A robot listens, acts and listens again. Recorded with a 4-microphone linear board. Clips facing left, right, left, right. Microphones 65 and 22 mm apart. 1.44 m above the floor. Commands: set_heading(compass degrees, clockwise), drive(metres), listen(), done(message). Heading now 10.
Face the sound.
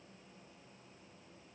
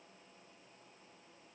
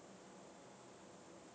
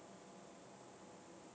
listen()
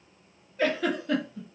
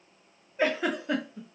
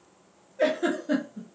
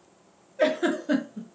set_heading(30)
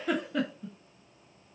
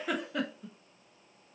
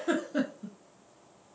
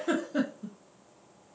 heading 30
done("Found it: a giggle, straight ahead, 1 to 2 m away.")